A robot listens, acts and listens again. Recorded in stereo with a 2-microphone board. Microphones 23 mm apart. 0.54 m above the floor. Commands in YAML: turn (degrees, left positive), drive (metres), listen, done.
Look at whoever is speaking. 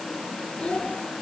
turn: 45
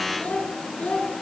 turn: 100
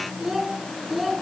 done: "Found it: a child speaking, straight ahead, over 4 m away."